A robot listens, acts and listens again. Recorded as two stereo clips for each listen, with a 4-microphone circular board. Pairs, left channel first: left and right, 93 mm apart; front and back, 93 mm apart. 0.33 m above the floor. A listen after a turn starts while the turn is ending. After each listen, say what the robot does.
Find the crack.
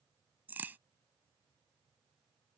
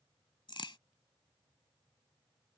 Turn 20° right.
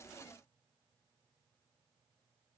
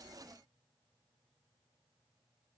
Facing where the crack came from. I can't hear it now.